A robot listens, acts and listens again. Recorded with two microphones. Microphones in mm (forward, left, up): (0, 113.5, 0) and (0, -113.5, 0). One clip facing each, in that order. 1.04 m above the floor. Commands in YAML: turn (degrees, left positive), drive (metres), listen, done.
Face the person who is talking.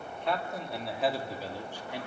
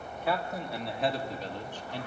turn: 30
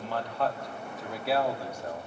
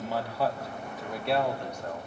turn: 30
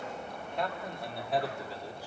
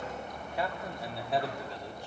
turn: 30
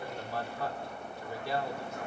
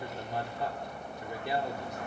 turn: -20
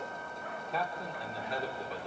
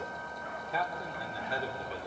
done: "Facing the man speaking."